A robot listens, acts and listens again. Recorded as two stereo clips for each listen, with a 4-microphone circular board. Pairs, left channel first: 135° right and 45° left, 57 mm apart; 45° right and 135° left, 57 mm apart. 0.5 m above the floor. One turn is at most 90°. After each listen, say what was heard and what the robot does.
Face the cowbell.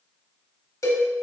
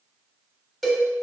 The cowbell: 135° right. Turn 90° right.
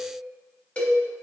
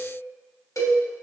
The cowbell is now 65° right. Turn 65° right.
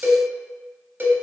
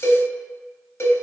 Found it: a cowbell, straight ahead, under 1 m away.